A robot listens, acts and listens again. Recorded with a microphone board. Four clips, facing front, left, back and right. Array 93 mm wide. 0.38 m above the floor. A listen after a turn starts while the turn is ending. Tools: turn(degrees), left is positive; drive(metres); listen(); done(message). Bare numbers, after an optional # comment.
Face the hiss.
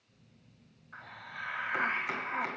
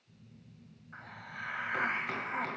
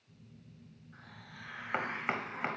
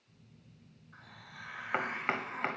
# The hiss: 40° left.
turn(40)
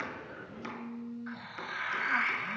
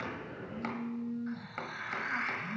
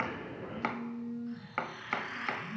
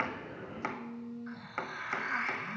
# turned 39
done("Found it: a hiss, straight ahead, 1 to 2 m away.")